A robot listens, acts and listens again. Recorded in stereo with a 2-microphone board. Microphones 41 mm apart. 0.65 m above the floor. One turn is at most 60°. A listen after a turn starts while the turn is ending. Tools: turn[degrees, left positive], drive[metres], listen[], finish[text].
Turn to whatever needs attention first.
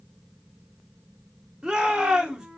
Thought: The shout: about 20° right or 160° right.
Action: turn[-20]
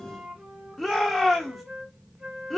Action: finish[Found it: a shout, straight ahead, 1 to 2 m away.]